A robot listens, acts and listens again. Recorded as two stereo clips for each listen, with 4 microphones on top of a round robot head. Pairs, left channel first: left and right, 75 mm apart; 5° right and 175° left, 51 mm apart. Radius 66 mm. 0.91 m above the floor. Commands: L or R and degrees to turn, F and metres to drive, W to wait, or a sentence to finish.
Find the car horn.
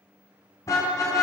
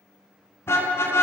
L35
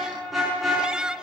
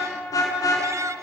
Facing the car horn.